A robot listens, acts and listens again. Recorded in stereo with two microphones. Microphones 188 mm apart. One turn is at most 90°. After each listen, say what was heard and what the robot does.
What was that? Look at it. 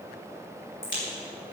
Turn 90° left.
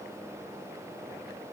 I heard a crack from this way, but can't make it out now.